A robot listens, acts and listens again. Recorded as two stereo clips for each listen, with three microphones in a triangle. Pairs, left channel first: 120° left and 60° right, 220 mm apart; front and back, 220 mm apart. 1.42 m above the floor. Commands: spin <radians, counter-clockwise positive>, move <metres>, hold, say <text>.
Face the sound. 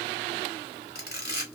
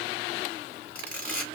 spin 1.48
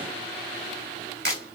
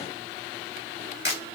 spin -0.52
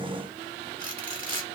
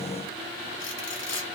say Found it: a camera shutter, straight ahead, 1 to 2 m away.